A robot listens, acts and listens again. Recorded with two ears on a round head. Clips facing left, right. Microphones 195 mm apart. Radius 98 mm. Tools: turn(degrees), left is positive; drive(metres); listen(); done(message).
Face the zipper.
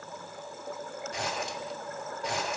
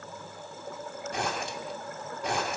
turn(degrees=-45)
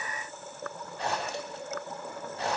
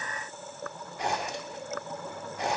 turn(degrees=-15)
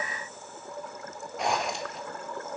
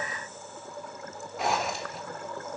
done("Found it: a zipper, straight ahead.")